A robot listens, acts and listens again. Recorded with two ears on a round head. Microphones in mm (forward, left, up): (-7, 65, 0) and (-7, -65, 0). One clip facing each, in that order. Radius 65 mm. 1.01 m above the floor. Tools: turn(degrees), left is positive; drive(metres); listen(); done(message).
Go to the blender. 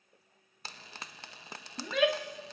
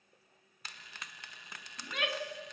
listen()
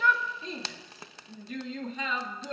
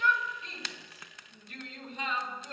listen()
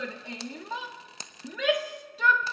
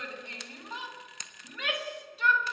done("I can't make out a blender to turn to.")